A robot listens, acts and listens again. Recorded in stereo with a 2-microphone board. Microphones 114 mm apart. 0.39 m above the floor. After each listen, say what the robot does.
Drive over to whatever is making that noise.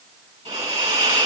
Turn 65° right.
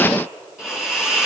Turn 10° right.
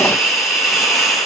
Drive 1.0 m forward.
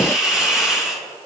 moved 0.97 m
Drive 1.0 m forward.
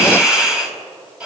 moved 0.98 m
Turn 10° right.
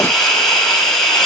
Drive 1.0 m forward.
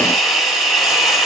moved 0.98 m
Drive 1.0 m forward.
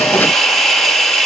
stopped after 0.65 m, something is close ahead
Arrived at the hiss, straight ahead.